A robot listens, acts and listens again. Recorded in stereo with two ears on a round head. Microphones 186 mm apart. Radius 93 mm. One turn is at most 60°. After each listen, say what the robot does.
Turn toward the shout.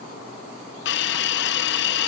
Keep listening.
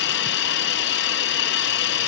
Keep listening.
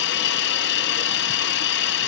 I can't make out a shout, only a hiss.